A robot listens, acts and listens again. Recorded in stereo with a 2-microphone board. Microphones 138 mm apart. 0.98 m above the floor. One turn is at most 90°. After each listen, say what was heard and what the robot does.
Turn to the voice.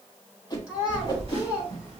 Turn 30° right.
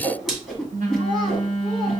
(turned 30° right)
Keep listening.
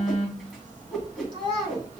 So it is at 145° right. Turn 90° right.
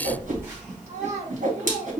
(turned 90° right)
The child speaking is now 55° right. Turn 55° right.
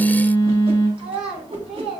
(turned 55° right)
The child speaking is now 10° right. Turn 10° right.
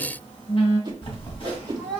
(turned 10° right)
Keep listening.
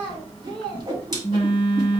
Facing the child speaking, 2 to 4 m away.